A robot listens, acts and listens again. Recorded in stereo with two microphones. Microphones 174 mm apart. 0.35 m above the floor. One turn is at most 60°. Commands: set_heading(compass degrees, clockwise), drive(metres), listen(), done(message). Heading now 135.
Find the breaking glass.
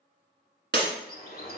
set_heading(195)
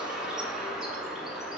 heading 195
listen()
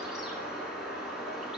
done("I heard breaking glass, but can't make it out now. It was about 15° right or 45° right.")